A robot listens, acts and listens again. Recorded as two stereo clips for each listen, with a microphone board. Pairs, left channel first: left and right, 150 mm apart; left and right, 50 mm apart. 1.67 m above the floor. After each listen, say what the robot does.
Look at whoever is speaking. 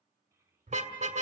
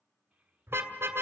Turn 20° right.
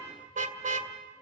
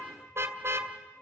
Keep listening.
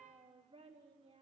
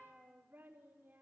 Turn 140° right.
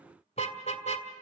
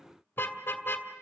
Keep listening.
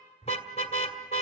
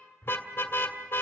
Keep listening.
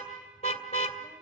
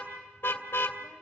Facing where the child speaking came from. I can't hear it now.